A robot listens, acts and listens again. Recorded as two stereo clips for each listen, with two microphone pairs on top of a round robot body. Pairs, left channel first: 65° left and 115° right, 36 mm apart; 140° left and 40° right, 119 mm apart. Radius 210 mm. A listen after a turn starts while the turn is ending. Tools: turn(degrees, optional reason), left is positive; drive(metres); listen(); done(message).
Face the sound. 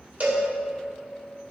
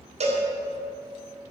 turn(degrees=-70, reason="The cowbell: 70° right.")
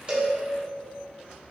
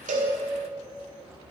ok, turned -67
listen()
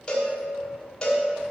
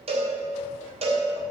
done("Found it: a cowbell, straight ahead, 1 to 2 m away.")